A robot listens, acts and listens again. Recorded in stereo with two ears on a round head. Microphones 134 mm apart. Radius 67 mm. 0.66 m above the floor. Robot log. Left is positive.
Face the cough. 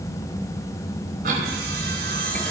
note: The cough: about 60° right or 120° right.
cmd yaw -60
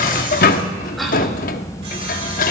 end: Facing the cough.